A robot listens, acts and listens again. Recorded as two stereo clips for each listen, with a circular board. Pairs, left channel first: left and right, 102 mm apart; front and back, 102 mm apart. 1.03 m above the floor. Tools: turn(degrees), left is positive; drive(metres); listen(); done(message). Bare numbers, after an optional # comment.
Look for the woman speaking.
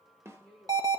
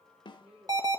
# The woman speaking: 170° left.
turn(170)
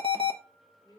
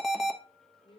# The woman speaking is now 30° left.
turn(30)
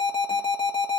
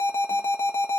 listen()
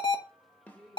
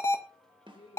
done("Found it: a woman speaking, straight ahead.")